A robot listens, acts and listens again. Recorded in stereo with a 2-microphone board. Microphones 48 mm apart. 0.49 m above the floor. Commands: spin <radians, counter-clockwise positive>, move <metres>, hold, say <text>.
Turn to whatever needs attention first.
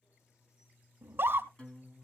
spin -0.87
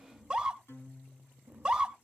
spin -0.35
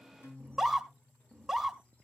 say Found it: a scream, straight ahead.